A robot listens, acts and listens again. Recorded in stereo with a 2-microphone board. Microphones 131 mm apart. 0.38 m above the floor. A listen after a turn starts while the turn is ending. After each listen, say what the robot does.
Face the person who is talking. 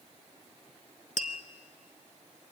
Keep listening.
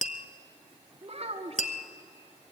Turn 55° right.
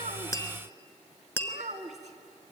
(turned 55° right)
Turn 70° right.
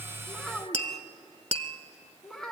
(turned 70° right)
Found it: a child speaking, straight ahead, 1 to 2 m away.